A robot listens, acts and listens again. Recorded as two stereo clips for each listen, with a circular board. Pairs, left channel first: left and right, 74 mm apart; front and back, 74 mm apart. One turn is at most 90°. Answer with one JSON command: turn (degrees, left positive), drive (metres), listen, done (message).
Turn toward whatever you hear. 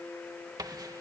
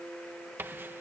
{"turn": -90}
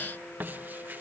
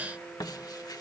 {"turn": -25}
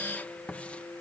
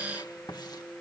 {"turn": 20}
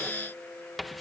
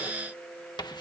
{"done": "Found it: writing, straight ahead."}